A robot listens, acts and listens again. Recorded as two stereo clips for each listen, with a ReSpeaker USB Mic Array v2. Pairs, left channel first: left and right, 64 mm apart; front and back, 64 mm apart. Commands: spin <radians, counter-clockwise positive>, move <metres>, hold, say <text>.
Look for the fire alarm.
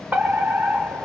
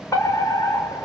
spin -0.52
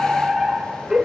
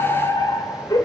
spin -0.17
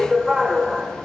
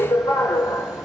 say Found it: a fire alarm, straight ahead, 2 to 4 m away.